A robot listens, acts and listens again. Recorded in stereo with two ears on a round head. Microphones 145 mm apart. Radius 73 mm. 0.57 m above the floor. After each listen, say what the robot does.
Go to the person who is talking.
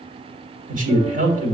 Turn 50° right.
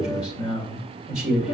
Drive 1.0 m forward.
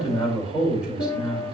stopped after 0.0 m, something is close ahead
Something is in my way. I am facing the man speaking but have not reached it.